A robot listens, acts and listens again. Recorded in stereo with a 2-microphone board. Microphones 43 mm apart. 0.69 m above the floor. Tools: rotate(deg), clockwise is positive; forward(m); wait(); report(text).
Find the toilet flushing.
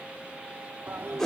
rotate(65)
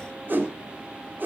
wait()
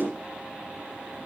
wait()
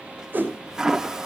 rotate(10)
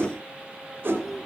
report("Facing the toilet flushing, under 1 m away.")